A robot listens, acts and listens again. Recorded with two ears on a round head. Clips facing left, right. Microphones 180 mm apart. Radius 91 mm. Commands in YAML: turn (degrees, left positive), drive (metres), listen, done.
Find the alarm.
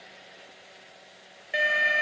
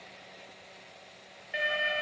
turn: 65
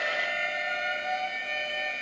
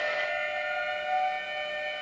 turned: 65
turn: 50
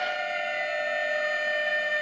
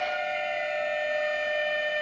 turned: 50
turn: 15
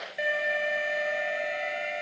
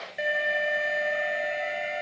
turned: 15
done: "Facing the alarm."